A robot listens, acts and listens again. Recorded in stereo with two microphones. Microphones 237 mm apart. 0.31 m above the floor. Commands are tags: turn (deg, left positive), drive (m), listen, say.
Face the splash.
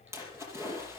<turn deg="-30"/>
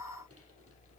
<listen/>
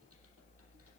<say>I heard a splash, but can't make it out now. It was about 20° left or 140° right.</say>